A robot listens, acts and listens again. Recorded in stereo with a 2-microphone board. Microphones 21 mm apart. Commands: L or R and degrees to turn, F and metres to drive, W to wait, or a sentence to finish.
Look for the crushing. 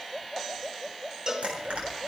R65
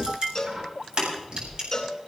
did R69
R50
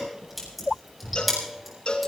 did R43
Found it: crushing, straight ahead.